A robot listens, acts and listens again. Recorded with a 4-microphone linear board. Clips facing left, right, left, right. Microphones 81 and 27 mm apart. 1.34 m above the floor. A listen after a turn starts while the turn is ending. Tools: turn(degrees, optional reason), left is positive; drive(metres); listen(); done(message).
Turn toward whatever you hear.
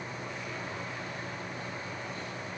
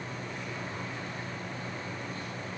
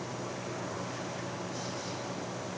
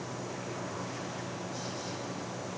listen()
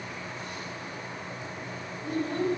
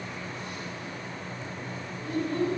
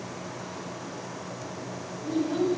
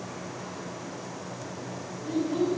turn(degrees=65, reason="The child speaking: about 65° left or 115° left.")
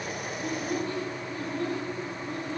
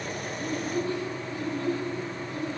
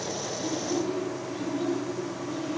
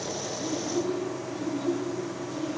turn(degrees=40, reason="So it is at 40° left.")
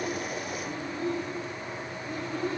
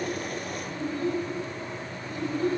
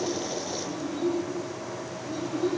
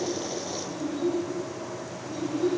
done("Found it: a child speaking, straight ahead, over 4 m away.")